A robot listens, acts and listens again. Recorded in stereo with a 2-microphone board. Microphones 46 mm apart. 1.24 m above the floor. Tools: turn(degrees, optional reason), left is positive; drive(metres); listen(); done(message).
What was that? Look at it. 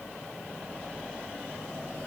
listen()
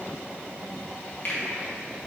turn(degrees=45, reason="The finger snap: about 45° left or 135° left.")
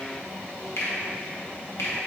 turn(degrees=90, reason="So it is at 90° left.")
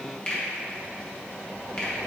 turn(degrees=20, reason="The finger snap is now 20° left.")
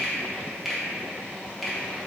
done("Found it: a finger snap, straight ahead, 1 to 2 m away.")